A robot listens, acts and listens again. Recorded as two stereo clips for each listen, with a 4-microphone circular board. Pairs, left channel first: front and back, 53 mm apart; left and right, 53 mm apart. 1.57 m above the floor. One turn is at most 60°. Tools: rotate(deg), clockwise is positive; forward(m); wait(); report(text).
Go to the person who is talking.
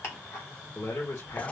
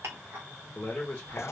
rotate(-20)
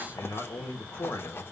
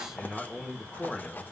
forward(1.0)
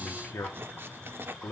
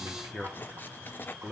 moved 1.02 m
rotate(10)
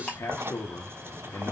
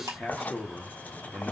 forward(1.0)
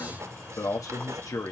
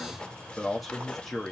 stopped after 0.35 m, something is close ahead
report("Arrived at the man speaking, straight ahead.")